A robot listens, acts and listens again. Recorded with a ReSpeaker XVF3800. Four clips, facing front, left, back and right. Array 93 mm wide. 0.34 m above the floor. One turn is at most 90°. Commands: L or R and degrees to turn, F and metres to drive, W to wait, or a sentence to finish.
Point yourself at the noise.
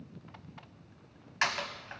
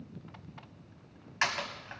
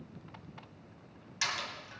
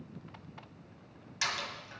L45
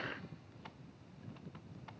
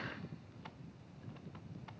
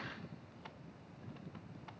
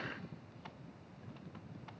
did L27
L20
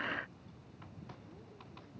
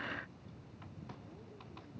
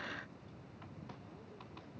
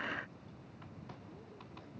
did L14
Facing where the door slam came from. I can't hear it now.